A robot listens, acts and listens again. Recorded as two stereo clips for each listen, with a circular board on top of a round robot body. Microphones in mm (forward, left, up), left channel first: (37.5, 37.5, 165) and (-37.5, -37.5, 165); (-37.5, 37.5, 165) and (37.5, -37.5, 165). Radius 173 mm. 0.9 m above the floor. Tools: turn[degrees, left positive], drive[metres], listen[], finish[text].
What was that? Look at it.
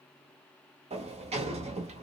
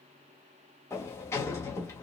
Thought: The sliding door: 160° right.
Action: turn[-160]
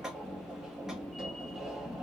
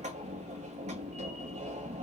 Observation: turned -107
Thought: The sliding door is now 50° right.
Action: turn[-50]
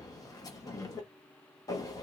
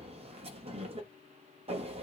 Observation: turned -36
Thought: The sliding door is now 15° right.
Action: turn[-15]
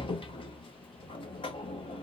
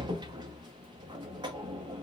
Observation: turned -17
Action: finish[Found it: a sliding door, straight ahead.]